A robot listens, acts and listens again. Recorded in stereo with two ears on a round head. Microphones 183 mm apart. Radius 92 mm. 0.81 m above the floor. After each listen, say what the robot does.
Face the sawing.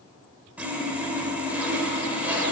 Turn 30° right.
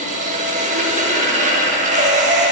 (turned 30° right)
Turn 140° right.
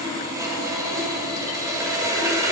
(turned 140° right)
Turn 15° right.
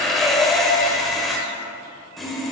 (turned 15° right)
Facing the sawing, under 1 m away.